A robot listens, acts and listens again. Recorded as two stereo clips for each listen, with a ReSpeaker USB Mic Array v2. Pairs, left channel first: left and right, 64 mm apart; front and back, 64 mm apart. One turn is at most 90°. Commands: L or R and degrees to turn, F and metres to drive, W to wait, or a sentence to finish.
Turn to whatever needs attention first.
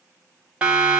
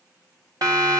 R90
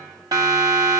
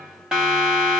R90
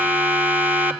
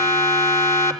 R25
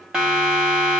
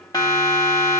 R10
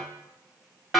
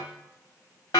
Found it: a siren, straight ahead, 2 to 4 m away.